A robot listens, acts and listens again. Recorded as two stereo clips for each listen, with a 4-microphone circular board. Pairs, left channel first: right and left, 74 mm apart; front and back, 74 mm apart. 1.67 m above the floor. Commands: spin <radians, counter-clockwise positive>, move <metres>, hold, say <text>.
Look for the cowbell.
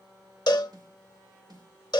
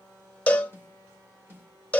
spin -1.22
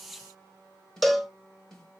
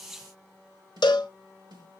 say Found it: a cowbell, straight ahead.